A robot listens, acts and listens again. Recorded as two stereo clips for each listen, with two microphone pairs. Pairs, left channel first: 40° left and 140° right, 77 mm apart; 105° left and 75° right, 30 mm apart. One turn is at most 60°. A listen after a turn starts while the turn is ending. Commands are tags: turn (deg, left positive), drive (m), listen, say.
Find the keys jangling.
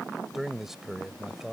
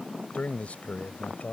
<listen/>
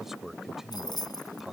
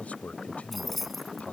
<turn deg="15"/>
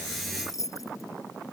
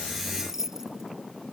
<say>Facing the keys jangling.</say>